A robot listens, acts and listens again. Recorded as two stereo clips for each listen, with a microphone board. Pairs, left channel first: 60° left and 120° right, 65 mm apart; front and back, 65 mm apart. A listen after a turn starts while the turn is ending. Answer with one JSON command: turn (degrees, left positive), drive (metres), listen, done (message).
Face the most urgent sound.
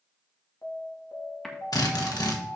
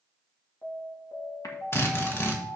{"turn": 20}
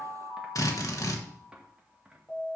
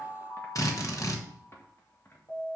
{"done": "Facing the alarm."}